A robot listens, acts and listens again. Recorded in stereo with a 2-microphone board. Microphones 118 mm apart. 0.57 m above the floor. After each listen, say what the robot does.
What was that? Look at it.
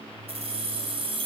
Turn 55° right.
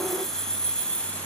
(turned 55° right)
Turn 10° left.
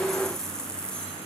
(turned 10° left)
Turn 10° left.
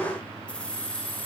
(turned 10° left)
Turn 15° left.
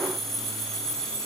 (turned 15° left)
Facing the keys jangling.